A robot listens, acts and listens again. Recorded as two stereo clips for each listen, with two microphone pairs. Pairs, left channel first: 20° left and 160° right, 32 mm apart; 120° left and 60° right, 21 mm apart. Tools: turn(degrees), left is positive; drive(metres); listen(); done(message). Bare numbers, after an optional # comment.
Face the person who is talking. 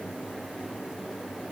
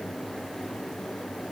listen()
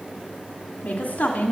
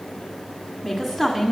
# The woman speaking: 15° left.
turn(15)
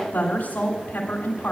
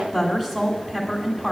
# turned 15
done("Facing the woman speaking.")